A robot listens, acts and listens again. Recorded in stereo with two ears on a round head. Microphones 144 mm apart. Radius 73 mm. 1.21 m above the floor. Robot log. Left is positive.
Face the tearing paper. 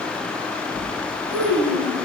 note: The tearing paper: about 20° right or 160° right.
cmd yaw -20
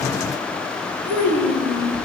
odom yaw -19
cmd idle
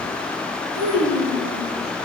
cmd idle
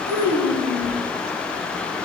end: I heard tearing paper, but can't make it out now. It was about 5° right or 140° right.